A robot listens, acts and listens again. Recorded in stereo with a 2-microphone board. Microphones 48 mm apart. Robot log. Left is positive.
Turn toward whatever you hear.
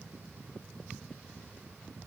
cmd idle
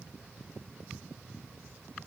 cmd idle
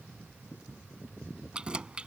note: The keys jangling: about 20° right or 160° right.
cmd yaw -20
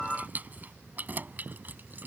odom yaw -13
note: The keys jangling: about 40° right or 140° right.
cmd yaw -40
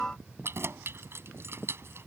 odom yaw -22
note: So it is at 120° right.
cmd yaw -120
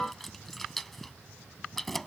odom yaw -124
end: Facing the keys jangling.